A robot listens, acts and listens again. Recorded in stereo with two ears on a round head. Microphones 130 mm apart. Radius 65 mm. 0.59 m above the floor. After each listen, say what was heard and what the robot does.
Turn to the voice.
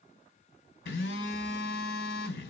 Keep listening.
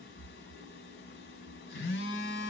Keep listening.
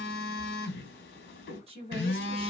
The woman speaking: about 40° right or 140° right. Turn 40° right.
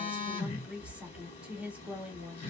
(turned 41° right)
So it is at 10° right. Turn 10° right.
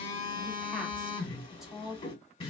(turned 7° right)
Found it: a woman speaking, straight ahead.